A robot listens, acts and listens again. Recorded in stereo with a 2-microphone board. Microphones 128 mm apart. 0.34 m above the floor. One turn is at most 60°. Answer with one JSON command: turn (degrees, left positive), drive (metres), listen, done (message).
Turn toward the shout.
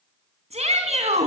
{"turn": -60}
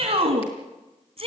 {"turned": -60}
{"turn": -55}
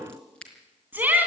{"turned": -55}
{"turn": -15}
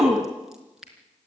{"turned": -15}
{"done": "Facing the shout."}